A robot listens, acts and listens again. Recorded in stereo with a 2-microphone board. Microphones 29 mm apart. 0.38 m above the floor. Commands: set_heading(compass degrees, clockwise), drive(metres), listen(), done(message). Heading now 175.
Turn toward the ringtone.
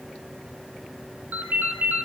set_heading(235)
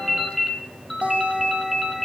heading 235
done("Facing the ringtone, 2 to 4 m away.")